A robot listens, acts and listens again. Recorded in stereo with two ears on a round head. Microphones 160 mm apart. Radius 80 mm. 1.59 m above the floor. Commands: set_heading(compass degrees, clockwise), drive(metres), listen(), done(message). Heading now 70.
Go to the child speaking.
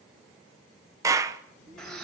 set_heading(25)
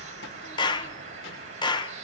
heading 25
listen()
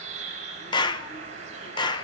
listen()
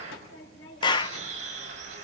set_heading(295)
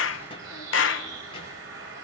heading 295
set_heading(265)
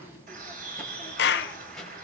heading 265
drive(1.0)
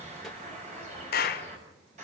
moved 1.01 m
listen()
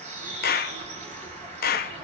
listen()
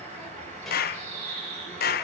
done("I heard a child speaking from this way, but can't make it out now. I did not reach it.")